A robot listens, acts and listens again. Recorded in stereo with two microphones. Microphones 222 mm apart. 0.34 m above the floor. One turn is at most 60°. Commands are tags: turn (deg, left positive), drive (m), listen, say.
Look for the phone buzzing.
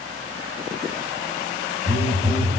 <turn deg="-20"/>
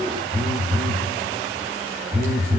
<say>Facing the phone buzzing.</say>